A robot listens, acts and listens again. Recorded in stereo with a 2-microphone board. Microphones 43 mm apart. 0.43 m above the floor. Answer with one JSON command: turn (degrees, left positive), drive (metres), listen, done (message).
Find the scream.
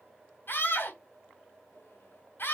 {"turn": 55}
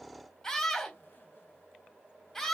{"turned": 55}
{"turn": 10}
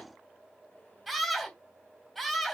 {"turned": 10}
{"done": "Facing the scream."}